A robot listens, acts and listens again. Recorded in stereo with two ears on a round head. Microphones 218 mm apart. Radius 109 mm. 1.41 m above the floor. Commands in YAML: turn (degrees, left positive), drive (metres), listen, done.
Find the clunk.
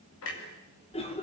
turn: 60
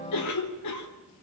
listen: true
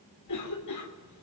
done: "I heard a clunk, but can't make it out now. It was about straight ahead or 60° left."